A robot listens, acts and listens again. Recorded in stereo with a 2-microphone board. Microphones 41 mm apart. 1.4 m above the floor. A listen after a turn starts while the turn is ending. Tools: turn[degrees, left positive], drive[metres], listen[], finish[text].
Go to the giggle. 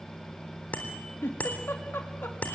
Thought: The giggle: about 70° left or 110° left.
Action: turn[70]
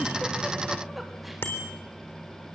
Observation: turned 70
Action: listen[]
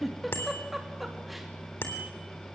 Action: drive[1.0]
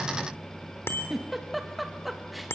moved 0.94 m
Action: drive[1.0]
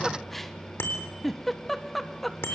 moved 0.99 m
Action: drive[1.0]
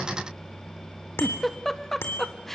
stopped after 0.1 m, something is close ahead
Thought: The giggle is now 10° left.
Action: turn[10]
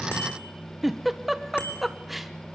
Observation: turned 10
Action: finish[Arrived at the giggle, straight ahead.]